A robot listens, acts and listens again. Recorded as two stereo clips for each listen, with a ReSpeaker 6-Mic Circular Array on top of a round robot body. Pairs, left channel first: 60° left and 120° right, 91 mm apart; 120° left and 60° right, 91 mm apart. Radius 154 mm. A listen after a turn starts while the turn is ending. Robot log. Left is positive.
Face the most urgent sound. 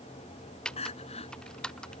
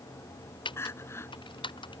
note: The crying: 55° left.
cmd yaw +55
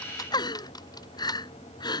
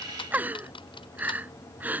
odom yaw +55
note: The crying is now 15° left.
cmd yaw +15
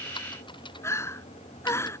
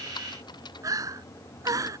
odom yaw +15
end: Found it: crying, straight ahead.